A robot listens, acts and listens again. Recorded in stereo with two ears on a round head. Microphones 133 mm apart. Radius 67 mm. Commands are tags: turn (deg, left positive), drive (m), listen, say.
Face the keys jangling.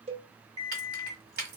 <turn deg="-70"/>
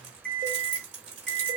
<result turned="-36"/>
<turn deg="-50"/>
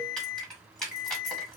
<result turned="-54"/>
<say>Facing the keys jangling, 1 to 2 m away.</say>